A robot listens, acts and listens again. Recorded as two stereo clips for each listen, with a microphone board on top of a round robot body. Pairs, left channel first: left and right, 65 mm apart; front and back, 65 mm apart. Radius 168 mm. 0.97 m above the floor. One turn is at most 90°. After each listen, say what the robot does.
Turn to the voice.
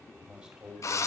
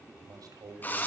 Turn 90° right.
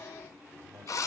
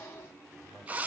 Turn 90° right.
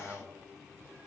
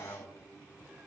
Turn 25° right.
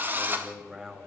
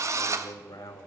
Turn 15° right.
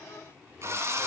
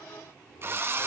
Found it: a man speaking, straight ahead, over 4 m away.